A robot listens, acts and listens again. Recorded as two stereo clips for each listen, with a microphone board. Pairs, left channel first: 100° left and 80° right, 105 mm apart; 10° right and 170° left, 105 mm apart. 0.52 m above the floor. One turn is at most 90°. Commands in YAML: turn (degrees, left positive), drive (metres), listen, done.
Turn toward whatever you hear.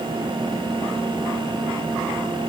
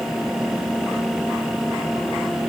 listen: true
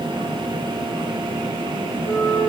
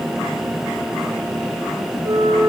turn: 90
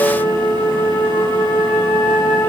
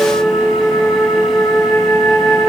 turn: 30
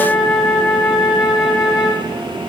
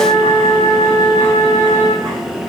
done: "Found it: a flute, straight ahead."